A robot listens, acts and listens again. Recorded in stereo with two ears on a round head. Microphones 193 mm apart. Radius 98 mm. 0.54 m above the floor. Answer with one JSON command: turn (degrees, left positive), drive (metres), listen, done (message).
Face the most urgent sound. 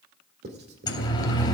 {"turn": 20}
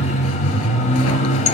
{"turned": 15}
{"turn": 145}
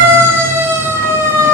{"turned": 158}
{"turn": -15}
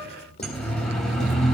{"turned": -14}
{"done": "Found it: a siren, straight ahead."}